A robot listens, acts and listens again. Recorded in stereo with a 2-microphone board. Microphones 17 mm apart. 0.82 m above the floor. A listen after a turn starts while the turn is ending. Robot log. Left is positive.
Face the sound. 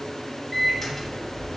note: The microwave: about 15° left or 165° left.
cmd yaw +15
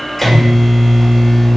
end: Found it: a microwave, straight ahead.